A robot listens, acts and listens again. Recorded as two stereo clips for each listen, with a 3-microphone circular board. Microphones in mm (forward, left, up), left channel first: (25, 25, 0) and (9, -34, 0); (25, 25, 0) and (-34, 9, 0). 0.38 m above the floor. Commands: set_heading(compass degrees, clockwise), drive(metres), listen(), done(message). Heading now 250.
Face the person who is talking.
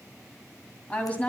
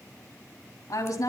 done("Found it: a woman speaking, straight ahead, 2 to 4 m away.")